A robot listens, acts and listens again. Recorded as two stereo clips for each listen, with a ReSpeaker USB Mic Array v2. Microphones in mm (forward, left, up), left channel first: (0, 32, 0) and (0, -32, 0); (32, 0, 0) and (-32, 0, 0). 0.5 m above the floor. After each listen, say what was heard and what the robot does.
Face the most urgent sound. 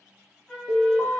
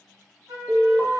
The alarm: 115° left. Turn 115° left.
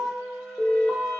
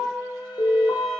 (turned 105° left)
The alarm is now 10° left. Turn 10° left.
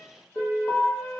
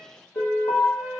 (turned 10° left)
Found it: an alarm, straight ahead, under 1 m away.